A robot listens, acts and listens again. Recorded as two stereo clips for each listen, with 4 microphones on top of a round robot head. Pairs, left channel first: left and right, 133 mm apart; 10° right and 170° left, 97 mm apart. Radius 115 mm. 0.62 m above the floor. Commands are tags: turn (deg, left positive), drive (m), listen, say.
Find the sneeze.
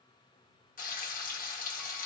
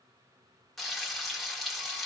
<listen/>
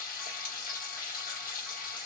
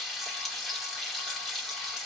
<listen/>
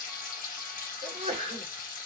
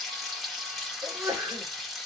<turn deg="-120"/>
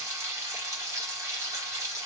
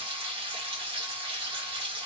<say>Facing where the sneeze came from. I can't hear it now.</say>